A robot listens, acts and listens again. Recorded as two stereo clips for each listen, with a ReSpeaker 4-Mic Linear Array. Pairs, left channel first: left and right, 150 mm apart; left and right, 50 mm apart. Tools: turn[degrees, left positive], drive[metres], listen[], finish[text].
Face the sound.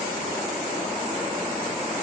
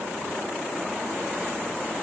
Action: listen[]
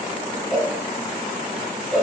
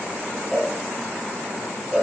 Action: turn[30]
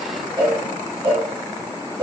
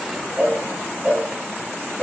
Thought: So it is at 30° right.
Action: turn[-30]
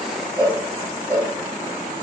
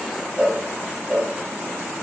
Thought: The cowbell is now 20° right.
Action: turn[-20]
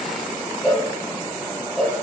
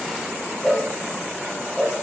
Action: finish[Facing the cowbell, 2 to 4 m away.]